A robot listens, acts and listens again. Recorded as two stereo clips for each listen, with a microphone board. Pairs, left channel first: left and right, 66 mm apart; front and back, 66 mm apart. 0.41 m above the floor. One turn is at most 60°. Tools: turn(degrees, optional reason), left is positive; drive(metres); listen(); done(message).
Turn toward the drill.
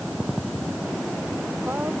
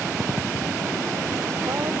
listen()
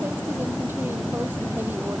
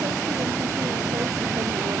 listen()
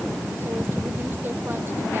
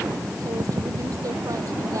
done("I can't make out a drill.")